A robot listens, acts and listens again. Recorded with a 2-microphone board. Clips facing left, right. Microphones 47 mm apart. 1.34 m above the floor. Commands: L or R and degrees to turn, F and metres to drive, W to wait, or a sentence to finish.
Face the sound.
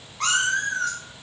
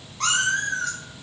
L30
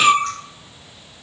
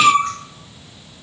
R25
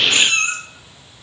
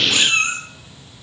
R15
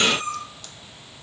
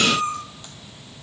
R15
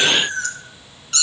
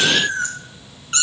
R30
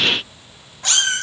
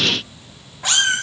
R10
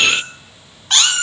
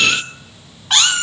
Facing the cat meowing, 1 to 2 m away.